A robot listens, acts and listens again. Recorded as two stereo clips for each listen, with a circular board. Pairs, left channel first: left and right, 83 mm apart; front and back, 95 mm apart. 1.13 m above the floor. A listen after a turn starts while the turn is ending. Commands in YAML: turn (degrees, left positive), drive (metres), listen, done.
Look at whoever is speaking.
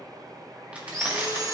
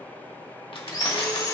listen: true
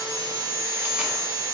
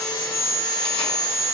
listen: true
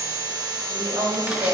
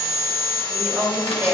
turn: -115
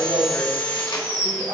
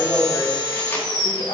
listen: true
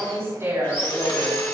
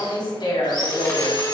turn: -35
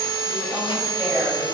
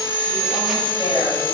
listen: true
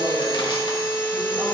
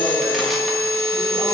listen: true
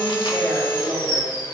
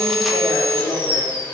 turn: -10
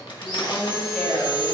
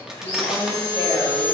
done: "Facing the woman speaking, over 4 m away."